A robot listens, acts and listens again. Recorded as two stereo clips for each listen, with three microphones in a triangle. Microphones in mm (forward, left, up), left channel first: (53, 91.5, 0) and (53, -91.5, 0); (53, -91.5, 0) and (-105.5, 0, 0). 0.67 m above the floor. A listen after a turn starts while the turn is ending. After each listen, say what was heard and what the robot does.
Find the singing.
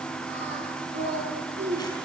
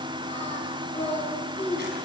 The singing: 90° right. Turn 90° right.
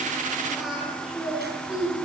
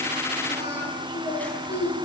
Facing the singing.